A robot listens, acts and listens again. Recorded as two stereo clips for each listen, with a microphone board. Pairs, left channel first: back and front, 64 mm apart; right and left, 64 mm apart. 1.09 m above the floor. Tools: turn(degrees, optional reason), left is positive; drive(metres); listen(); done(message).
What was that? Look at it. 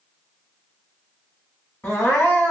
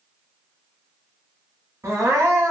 turn(degrees=125, reason="The crying: 125° left.")
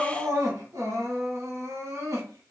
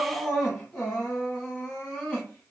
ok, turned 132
done("Found it: crying, straight ahead.")